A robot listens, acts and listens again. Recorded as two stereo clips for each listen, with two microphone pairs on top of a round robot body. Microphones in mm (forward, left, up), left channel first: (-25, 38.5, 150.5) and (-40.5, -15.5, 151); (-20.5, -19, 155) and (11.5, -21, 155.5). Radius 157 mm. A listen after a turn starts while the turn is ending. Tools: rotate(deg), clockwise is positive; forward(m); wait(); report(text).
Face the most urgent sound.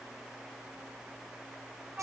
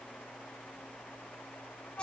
wait()
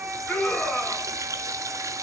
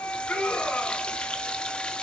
rotate(-150)
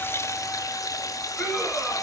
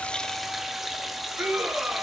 report("Facing the scream, over 4 m away.")